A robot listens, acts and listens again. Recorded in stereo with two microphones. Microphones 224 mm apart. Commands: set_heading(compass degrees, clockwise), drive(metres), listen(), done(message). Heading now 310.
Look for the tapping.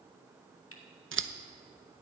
listen()
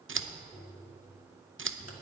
set_heading(295)
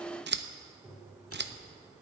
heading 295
done("Found it: tapping, straight ahead.")